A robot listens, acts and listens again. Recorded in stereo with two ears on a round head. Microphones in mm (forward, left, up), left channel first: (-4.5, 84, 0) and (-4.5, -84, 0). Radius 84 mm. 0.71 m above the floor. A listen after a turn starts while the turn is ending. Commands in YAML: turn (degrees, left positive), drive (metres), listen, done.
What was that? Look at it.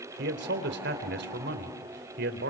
turn: -65
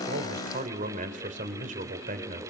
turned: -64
turn: -45
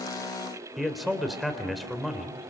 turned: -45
done: "Found it: a man speaking, straight ahead, 2 to 4 m away."